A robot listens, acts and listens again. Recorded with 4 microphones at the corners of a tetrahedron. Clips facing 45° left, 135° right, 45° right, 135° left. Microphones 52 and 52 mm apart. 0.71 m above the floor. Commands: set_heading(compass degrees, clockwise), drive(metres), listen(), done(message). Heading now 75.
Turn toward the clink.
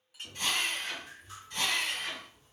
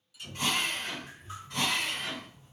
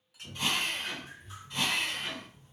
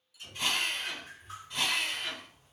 done("Found it: a clink, straight ahead, under 1 m away.")